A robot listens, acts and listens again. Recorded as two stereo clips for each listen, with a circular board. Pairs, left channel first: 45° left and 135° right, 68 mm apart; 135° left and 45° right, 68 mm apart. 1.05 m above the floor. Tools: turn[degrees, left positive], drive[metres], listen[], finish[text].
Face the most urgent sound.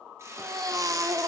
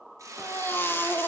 Thought: The baby crying: 170° right.
Action: turn[-170]
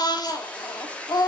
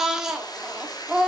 Thought: The baby crying is now 35° left.
Action: turn[35]
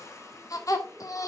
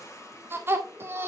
Thought: The baby crying is now 10° left.
Action: turn[10]
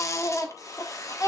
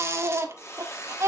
Action: finish[Found it: a baby crying, straight ahead, 1 to 2 m away.]